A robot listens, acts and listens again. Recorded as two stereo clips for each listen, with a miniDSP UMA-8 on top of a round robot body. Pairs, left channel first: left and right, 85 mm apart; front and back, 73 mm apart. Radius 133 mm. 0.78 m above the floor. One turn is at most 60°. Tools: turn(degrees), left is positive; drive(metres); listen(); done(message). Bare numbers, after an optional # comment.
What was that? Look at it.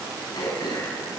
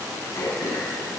# The throat clearing: 50° left.
turn(50)
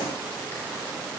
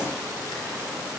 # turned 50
listen()
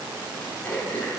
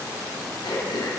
# The throat clearing is now 20° left.
turn(20)
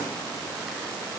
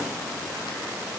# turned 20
listen()
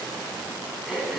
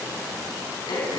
done("Found it: throat clearing, straight ahead.")